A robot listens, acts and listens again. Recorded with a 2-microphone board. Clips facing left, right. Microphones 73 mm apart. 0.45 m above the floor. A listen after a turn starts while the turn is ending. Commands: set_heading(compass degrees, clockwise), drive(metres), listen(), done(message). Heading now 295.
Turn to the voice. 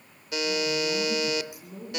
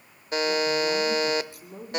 set_heading(340)
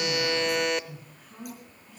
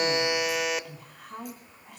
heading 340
set_heading(65)
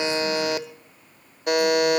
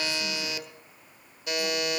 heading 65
listen()
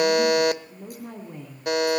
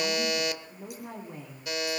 set_heading(75)
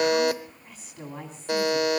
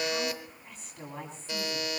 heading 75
done("Found it: a woman speaking, straight ahead, 2 to 4 m away.")